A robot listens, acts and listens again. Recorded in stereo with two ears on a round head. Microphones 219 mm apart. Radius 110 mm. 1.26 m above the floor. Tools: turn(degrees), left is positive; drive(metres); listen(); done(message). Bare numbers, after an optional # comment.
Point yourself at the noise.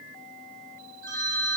# The phone ringing: about 65° right or 115° right.
turn(-65)
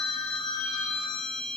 done("Facing the phone ringing.")